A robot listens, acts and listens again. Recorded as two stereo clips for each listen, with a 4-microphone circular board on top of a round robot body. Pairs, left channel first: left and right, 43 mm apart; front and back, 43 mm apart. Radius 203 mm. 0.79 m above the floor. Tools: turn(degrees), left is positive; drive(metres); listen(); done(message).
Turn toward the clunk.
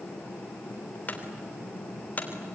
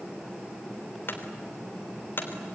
turn(degrees=35)
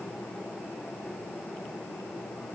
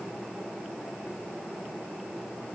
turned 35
done("I heard a clunk from this way, but can't make it out now.")